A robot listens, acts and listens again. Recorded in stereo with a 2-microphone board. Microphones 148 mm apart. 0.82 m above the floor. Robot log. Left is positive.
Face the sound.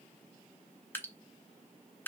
cmd yaw +30
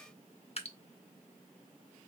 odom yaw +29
note: So it is at 135° left.
cmd yaw +135
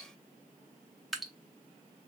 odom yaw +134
end: Found it: dripping, straight ahead, under 1 m away.